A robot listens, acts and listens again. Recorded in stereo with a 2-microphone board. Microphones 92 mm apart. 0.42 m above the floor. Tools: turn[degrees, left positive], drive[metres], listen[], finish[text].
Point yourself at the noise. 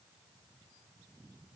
Action: listen[]
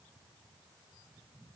Action: listen[]
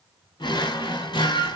Thought: The drawer: about 65° left or 115° left.
Action: turn[65]
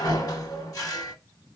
Thought: So it is at 45° left.
Action: turn[45]
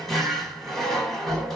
Action: finish[Found it: a drawer, straight ahead.]